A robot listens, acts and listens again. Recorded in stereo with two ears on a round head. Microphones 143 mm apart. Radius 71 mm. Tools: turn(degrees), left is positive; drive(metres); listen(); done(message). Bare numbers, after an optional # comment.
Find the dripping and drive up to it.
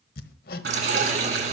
# The dripping: about 75° right or 105° right.
turn(-75)
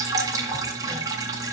# So it is at 25° right.
turn(-25)
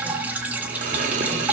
# The dripping is now 10° right.
turn(-10)
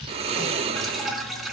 drive(1.0)
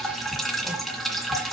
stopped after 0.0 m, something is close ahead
done("Blocked. The dripping is further on, straight ahead.")